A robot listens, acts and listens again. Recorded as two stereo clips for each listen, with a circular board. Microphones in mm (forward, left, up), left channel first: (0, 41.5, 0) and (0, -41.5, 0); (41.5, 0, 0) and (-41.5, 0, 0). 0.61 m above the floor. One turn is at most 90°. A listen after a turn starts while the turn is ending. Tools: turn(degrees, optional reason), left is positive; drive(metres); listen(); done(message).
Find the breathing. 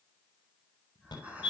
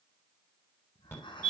turn(degrees=-20, reason="The breathing: 20° right.")
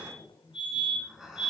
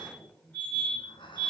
done("Found it: breathing, straight ahead.")